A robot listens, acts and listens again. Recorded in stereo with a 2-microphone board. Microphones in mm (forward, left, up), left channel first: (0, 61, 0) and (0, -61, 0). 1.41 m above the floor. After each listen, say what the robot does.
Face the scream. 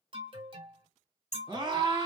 Turn 40° right.
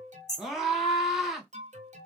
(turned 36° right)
Facing the scream.